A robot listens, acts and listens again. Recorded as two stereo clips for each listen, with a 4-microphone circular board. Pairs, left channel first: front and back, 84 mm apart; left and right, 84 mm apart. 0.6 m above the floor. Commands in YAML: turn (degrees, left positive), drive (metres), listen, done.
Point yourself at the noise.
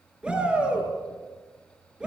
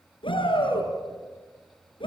turn: 100
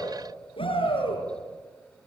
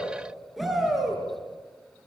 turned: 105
done: "Facing the shout, over 4 m away."